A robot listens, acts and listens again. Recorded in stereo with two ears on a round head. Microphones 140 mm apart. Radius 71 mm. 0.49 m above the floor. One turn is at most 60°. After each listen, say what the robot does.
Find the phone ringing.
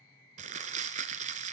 Keep listening.
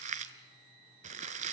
Keep listening.
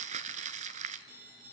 Turn 60° right.
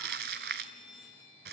Found it: a phone ringing, straight ahead.